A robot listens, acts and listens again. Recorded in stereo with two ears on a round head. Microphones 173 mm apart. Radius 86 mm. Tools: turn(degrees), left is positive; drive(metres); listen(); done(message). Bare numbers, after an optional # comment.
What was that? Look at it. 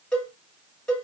turn(30)
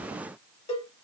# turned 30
# So it is at 145° left.
turn(145)
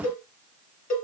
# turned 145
# The cowbell is now 45° left.
turn(45)
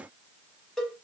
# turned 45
done("Facing the cowbell.")